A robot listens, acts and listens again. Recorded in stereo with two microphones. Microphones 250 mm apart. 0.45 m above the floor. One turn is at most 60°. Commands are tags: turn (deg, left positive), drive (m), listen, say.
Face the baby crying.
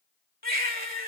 <turn deg="-40"/>
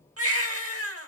<turn deg="-60"/>
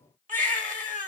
<turn deg="-35"/>
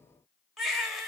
<say>Found it: a baby crying, straight ahead, under 1 m away.</say>